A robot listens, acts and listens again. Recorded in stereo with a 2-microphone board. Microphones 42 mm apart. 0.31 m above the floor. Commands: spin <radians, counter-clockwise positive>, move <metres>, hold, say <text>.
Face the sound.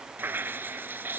spin -0.87
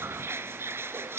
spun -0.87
spin -1.40
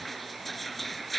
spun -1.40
say Facing the dripping.